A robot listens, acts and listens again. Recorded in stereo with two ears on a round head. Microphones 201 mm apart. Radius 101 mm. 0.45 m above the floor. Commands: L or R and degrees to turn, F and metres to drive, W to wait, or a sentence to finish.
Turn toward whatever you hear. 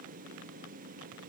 W
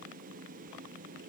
W
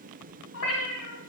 L75
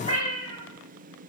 L25
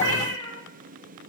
L15
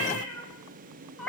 Facing the cat meowing, 1 to 2 m away.